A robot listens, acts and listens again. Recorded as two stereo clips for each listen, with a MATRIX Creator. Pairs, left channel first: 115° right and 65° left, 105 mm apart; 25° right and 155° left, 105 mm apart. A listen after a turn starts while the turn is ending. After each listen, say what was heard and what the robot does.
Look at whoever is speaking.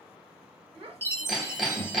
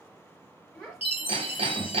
The child speaking: 65° left. Turn 65° left.
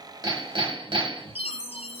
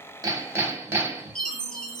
Keep listening.
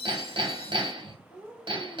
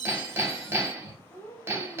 The child speaking is now 10° left. Turn 10° left.
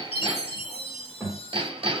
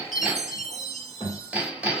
Found it: a child speaking, straight ahead, 2 to 4 m away.